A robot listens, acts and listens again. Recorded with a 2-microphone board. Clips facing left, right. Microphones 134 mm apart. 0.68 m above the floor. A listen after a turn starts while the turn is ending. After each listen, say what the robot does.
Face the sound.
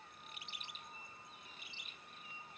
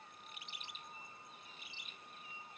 Keep listening.
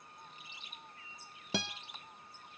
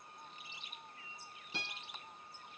Turn 90° left.
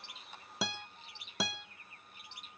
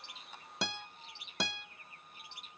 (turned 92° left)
Found it: a guitar, straight ahead.